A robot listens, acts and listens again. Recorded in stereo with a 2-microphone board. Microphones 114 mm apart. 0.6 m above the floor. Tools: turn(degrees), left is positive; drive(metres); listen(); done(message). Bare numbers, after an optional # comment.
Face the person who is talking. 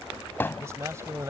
# The man speaking: about 25° right or 155° right.
turn(-25)
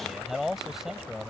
done("Found it: a man speaking, straight ahead.")